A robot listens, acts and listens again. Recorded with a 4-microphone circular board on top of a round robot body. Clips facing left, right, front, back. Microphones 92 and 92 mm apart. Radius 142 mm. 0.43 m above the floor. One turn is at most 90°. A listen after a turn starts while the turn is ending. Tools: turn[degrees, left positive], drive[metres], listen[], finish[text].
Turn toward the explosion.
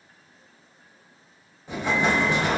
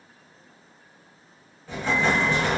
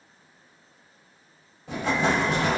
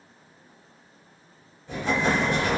Thought: The explosion: 15° left.
Action: turn[15]
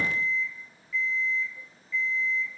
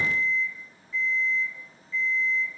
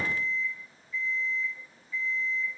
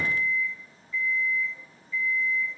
Action: finish[Facing where the explosion came from. I can't hear it now.]